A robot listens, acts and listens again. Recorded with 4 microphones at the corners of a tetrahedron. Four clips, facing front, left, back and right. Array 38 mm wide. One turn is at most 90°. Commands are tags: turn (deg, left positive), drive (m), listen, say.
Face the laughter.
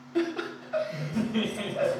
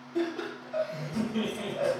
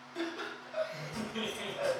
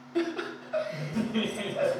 <turn deg="-35"/>
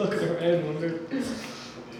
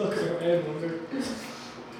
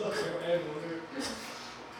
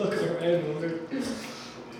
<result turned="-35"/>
<say>Found it: laughter, straight ahead.</say>